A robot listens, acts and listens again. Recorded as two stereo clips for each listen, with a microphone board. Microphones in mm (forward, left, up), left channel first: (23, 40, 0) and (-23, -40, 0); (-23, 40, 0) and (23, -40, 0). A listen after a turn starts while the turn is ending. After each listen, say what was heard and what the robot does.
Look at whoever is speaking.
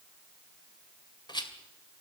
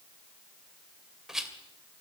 Keep listening.
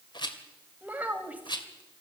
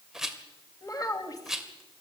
The child speaking: 170° left. Turn 170° left.
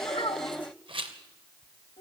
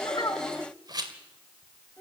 The child speaking is now 40° left. Turn 40° left.
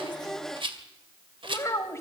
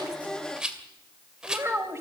Found it: a child speaking, straight ahead.